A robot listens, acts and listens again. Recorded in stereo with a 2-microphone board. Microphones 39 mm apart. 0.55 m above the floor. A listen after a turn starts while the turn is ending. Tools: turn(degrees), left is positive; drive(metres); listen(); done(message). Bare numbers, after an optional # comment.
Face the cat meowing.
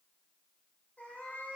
# The cat meowing: about 50° left or 130° left.
turn(50)
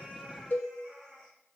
# So it is at 15° left.
turn(15)
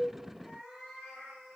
done("Found it: a cat meowing, straight ahead, 2 to 4 m away.")